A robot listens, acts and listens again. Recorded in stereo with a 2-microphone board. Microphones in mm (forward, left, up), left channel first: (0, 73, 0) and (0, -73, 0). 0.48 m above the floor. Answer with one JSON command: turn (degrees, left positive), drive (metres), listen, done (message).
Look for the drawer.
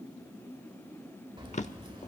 {"turn": 55}
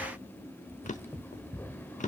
{"turn": 65}
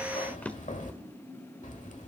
{"turn": 10}
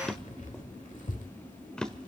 {"done": "Facing the drawer."}